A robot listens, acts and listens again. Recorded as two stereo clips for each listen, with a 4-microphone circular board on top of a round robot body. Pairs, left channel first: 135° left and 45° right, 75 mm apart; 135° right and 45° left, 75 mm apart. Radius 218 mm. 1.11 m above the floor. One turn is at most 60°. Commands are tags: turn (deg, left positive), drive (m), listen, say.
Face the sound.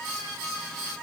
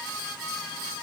<listen/>
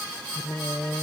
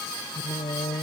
<turn deg="-60"/>
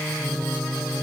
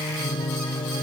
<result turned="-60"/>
<turn deg="-60"/>
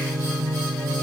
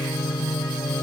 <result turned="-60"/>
<turn deg="-60"/>
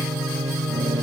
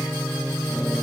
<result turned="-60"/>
<turn deg="-30"/>
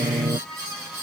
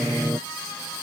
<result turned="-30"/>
<turn deg="-10"/>
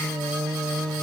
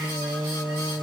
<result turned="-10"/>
<say>Facing the singing.</say>